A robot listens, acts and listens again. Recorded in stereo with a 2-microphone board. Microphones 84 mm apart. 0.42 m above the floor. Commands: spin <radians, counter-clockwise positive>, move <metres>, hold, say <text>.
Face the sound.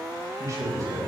spin -0.70
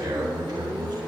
spin -1.66
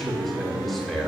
say Found it: a man speaking, straight ahead.